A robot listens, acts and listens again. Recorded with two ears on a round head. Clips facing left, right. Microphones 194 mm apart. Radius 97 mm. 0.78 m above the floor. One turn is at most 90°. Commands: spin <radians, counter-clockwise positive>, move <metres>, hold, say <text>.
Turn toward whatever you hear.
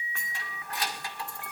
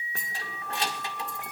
spin -0.44
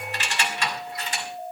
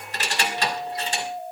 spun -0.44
spin -0.44
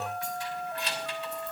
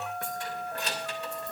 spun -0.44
spin -1.57
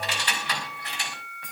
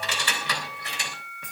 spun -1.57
spin -1.48
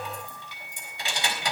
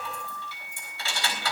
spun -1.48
spin 0.26
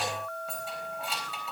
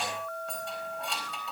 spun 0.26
say Found it: keys jangling, straight ahead, 2 to 4 m away.